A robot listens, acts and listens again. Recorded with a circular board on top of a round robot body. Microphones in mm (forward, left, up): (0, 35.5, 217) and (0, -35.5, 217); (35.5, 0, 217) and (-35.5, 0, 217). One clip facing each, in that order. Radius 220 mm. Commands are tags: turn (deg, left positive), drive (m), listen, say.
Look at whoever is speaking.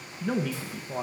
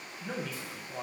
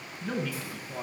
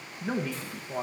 <turn deg="120"/>
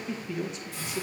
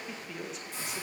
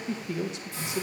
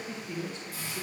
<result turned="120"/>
<say>Facing the man speaking.</say>